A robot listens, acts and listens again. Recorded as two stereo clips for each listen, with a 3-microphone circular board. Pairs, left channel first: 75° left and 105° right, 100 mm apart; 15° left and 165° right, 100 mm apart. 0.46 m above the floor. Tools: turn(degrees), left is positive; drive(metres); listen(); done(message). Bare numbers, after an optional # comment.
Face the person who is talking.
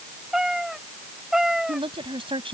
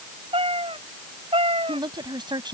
# The woman speaking: 125° right.
turn(-125)
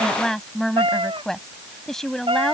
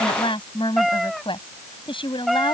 # The woman speaking is now 10° right.
turn(-10)
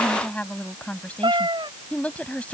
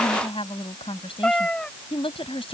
done("Facing the woman speaking.")